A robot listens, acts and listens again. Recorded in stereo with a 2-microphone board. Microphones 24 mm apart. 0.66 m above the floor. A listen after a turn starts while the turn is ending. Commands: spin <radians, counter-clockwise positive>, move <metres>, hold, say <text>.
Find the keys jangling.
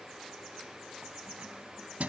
spin -1.57
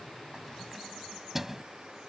spin -0.26
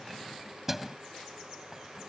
spin -0.26
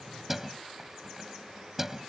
spin -0.35
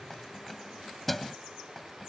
say Facing the keys jangling.